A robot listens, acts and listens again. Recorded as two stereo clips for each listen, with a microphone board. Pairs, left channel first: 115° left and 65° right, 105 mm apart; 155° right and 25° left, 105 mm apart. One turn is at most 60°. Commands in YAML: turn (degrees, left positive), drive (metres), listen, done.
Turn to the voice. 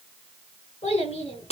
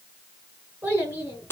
turn: 60
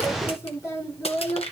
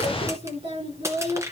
turn: 45
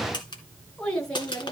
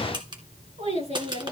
turn: 25
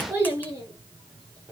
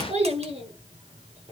done: "Facing the child speaking."